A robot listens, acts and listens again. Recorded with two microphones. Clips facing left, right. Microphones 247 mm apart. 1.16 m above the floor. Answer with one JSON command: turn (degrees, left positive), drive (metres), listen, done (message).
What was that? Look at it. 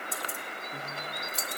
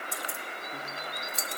{"turn": 30}
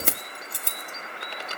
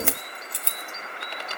{"turn": 125}
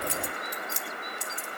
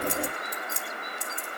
{"turn": -60}
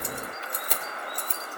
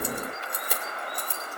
{"turn": -10}
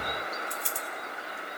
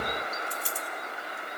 {"done": "Found it: keys jangling, straight ahead, 2 to 4 m away."}